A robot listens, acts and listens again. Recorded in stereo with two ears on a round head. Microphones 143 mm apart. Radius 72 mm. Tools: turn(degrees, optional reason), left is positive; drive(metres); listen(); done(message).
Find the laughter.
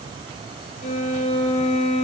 listen()
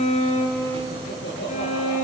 turn(degrees=90)
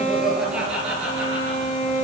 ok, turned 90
turn(degrees=-10, reason="So it is at 10° right.")
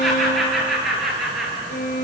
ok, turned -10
done("Found it: laughter, straight ahead, over 4 m away.")